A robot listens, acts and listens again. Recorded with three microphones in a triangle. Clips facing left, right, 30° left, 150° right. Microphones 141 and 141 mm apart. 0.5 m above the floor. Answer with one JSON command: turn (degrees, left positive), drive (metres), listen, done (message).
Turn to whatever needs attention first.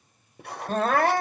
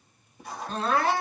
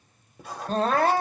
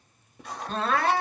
{"turn": 70}
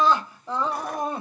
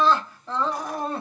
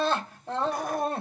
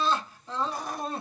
{"turn": 20}
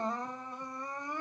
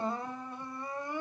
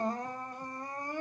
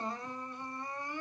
{"done": "Found it: crying, straight ahead."}